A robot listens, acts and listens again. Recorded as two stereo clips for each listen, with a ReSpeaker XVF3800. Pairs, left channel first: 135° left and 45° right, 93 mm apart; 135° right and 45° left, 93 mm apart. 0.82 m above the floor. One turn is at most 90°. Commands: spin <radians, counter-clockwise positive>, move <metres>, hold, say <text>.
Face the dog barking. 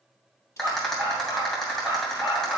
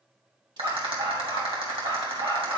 spin 0.35
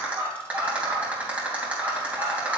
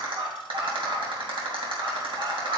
spin 0.26
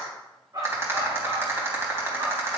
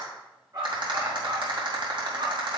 say Facing the dog barking.